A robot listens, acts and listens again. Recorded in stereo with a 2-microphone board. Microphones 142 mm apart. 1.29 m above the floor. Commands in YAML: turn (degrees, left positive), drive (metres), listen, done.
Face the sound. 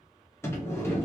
turn: 20
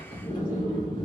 turn: 145
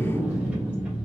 turn: -10
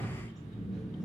done: "Facing the sliding door."